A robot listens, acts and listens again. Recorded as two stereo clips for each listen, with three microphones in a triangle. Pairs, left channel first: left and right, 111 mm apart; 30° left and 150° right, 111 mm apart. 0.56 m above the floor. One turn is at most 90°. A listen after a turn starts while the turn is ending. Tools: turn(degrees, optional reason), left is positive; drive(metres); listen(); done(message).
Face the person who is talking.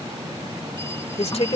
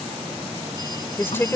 turn(degrees=90, reason="The woman speaking: 95° left.")
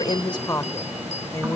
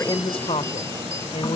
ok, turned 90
turn(degrees=35, reason="The woman speaking is now 35° left.")
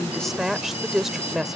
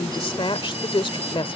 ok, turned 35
done("Facing the woman speaking.")